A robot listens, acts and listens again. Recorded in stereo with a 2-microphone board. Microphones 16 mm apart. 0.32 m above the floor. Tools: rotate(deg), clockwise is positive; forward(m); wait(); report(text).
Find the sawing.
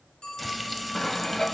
rotate(-35)
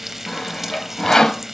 rotate(-105)
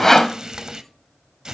rotate(-30)
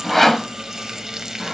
rotate(-10)
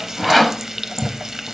report("Found it: sawing, straight ahead.")